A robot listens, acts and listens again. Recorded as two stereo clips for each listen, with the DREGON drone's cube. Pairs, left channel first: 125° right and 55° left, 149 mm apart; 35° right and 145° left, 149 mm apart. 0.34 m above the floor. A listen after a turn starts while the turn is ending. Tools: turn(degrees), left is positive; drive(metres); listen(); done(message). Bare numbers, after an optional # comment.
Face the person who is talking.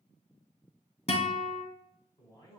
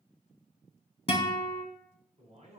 # The man speaking: 175° left.
turn(175)
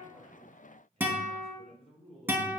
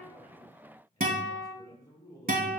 # The man speaking is now 25° left.
turn(25)
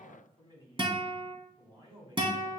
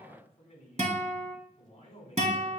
done("Found it: a man speaking, straight ahead.")